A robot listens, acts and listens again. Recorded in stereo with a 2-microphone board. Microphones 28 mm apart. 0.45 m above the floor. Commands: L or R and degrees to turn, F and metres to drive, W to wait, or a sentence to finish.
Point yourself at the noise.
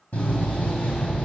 L70
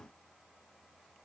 W
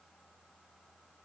I heard a door slam, but can't make it out now. It was about straight ahead or 40° left.